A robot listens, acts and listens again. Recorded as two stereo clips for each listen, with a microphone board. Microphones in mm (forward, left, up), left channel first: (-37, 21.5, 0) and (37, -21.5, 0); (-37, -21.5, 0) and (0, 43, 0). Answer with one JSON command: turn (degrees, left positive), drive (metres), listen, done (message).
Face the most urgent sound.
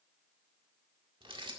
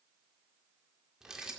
{"listen": true}
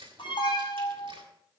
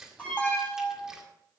{"turn": 165}
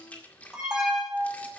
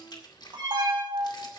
{"turn": 50}
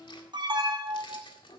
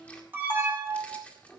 {"done": "Facing the alarm, over 4 m away."}